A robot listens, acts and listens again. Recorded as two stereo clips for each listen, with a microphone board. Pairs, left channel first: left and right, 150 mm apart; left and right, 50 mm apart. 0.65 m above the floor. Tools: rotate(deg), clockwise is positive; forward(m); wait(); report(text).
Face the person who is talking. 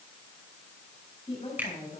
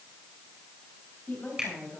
rotate(-40)
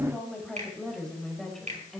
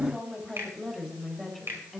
report("Found it: a woman speaking, straight ahead.")